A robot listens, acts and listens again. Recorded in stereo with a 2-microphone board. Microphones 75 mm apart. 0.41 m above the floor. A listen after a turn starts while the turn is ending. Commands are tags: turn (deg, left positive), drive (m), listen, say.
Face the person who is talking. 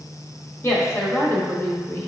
<turn deg="35"/>
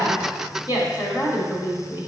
<turn deg="100"/>
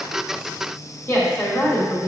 <turn deg="35"/>
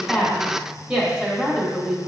<turn deg="-15"/>
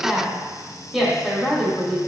<say>Found it: a woman speaking, straight ahead, 1 to 2 m away.</say>